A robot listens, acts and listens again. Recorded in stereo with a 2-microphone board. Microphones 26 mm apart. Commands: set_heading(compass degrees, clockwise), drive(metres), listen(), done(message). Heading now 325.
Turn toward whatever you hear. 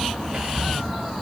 listen()
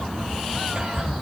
set_heading(15)
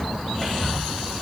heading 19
done("Found it: whispering, straight ahead.")